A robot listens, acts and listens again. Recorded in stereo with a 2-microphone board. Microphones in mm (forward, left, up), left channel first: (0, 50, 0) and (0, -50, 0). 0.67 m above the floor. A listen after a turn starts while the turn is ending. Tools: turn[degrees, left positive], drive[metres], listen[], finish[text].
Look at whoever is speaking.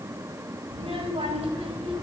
Action: turn[-90]
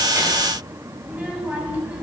Thought: So it is at 15° right.
Action: turn[-15]
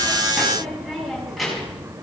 Action: finish[Found it: a child speaking, straight ahead, over 4 m away.]